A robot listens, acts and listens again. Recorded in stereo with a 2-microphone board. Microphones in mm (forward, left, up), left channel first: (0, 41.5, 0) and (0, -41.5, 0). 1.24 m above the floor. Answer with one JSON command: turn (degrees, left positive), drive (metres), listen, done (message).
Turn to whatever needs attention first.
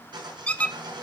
{"listen": true}
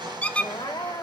{"turn": 90}
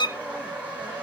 {"listen": true}
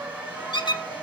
{"listen": true}
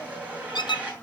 {"done": "Facing where the crying came from. I can't hear it now."}